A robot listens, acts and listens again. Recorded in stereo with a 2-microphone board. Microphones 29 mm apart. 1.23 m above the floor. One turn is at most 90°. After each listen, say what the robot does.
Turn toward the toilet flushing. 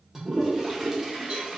Turn 30° right.
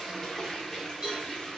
Turn 15° left.
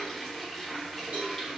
Facing the toilet flushing, under 1 m away.